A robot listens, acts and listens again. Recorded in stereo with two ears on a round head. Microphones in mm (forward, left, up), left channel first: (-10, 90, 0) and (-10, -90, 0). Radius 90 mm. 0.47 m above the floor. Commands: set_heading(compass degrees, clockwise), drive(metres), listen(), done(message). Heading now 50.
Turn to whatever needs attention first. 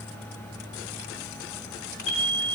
set_heading(20)
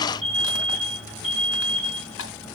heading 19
set_heading(49)
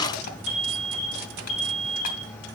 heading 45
done("Found it: an alarm, straight ahead, over 4 m away.")